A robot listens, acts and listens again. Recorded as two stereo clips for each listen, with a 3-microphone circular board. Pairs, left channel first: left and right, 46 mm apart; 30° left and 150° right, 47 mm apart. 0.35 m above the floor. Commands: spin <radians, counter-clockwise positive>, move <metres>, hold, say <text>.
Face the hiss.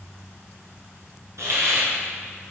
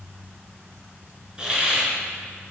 spin -1.31
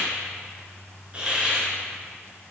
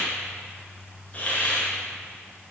spin -0.44
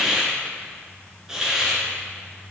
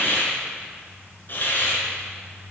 spin -0.26
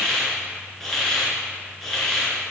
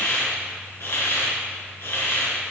say Facing the hiss.